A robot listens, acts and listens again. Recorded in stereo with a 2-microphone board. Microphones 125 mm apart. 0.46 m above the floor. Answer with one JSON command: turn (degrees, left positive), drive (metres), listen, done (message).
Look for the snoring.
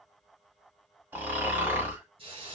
{"turn": -15}
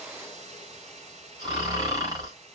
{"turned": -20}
{"turn": -145}
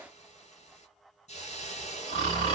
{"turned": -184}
{"turn": 40}
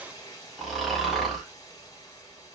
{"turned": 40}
{"done": "Found it: snoring, straight ahead, 1 to 2 m away."}